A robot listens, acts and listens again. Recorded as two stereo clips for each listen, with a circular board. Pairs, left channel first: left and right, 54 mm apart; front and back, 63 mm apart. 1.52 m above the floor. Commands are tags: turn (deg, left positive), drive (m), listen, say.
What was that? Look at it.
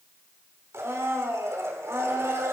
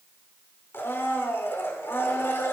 <turn deg="-55"/>
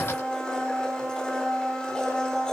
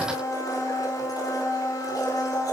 <turn deg="15"/>
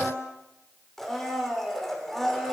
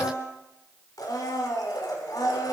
<say>Found it: a blender, straight ahead.</say>